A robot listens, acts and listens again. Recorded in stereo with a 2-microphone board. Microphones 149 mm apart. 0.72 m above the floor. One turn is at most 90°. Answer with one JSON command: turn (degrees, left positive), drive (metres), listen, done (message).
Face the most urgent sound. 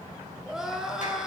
{"turn": -30}
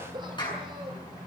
{"listen": true}
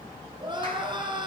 {"turn": -90}
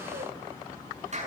{"turn": -60}
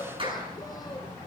{"listen": true}
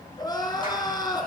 {"turn": 25}
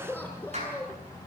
{"turn": 10}
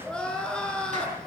{"done": "Facing the crying."}